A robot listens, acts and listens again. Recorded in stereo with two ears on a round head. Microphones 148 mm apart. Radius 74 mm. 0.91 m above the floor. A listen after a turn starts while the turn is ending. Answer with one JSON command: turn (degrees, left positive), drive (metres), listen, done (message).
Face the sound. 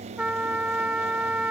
{"turn": -30}
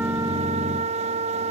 {"turn": -140}
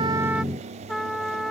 {"done": "Found it: a trumpet, straight ahead."}